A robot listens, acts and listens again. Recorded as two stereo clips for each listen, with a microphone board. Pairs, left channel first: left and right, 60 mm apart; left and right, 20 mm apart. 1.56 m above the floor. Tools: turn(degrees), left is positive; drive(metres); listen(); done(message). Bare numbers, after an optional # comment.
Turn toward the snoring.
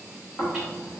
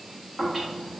turn(30)
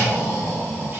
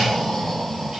# So it is at 135° left.
turn(135)
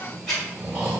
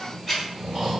# The snoring is now 15° right.
turn(-15)
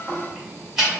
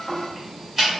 done("Found it: snoring, straight ahead, 1 to 2 m away.")